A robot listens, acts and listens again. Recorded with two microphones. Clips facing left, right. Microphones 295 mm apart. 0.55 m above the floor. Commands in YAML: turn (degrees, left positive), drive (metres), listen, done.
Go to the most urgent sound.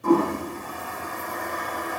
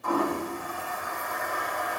listen: true
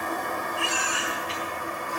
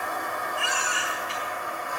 turn: -55
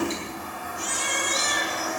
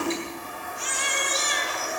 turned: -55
turn: -65
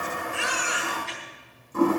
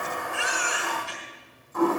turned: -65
turn: -10
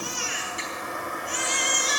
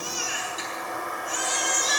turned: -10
drive: 1.0
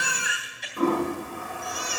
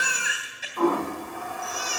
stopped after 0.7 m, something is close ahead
done: "Blocked. The baby crying is further on, straight ahead."